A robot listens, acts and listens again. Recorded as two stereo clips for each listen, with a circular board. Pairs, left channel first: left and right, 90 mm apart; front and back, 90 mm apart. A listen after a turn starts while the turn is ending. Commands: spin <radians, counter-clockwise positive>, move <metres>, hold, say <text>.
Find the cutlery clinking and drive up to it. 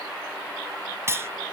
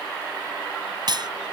spin -2.62
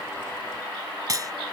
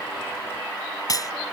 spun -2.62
spin -0.79
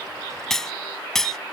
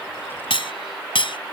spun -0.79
move 1.0
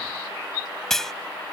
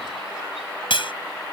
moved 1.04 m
move 1.0
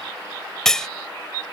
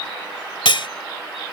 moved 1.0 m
move 1.0
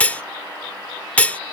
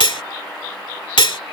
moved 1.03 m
spin 0.26
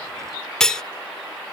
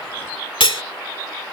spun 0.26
move 1.0
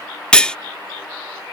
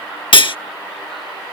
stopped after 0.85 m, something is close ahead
spin 0.17
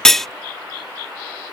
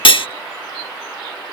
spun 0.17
say Arrived at the cutlery clinking, straight ahead.